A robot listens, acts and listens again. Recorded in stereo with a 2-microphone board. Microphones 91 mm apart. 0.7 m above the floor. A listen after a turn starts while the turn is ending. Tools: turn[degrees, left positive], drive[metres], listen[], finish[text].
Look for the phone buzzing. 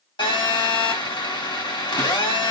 Thought: The phone buzzing: about 60° left or 120° left.
Action: turn[60]
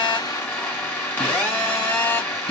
Thought: So it is at 25° left.
Action: turn[25]
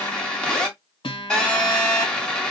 Thought: The phone buzzing is now 10° left.
Action: turn[10]
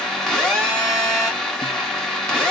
Action: finish[Facing the phone buzzing, 2 to 4 m away.]